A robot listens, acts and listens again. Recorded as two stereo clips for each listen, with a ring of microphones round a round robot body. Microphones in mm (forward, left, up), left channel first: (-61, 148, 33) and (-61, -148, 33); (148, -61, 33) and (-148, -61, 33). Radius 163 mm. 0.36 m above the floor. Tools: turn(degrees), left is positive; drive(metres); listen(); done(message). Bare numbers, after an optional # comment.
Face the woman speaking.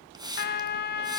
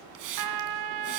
listen()
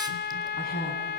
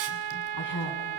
# The woman speaking: 25° left.
turn(25)
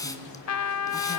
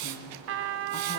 listen()
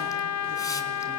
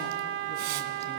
listen()
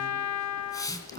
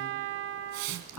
# The woman speaking is now 25° right.
turn(-25)
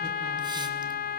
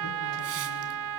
listen()
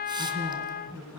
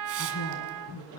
done("Facing the woman speaking, over 4 m away.")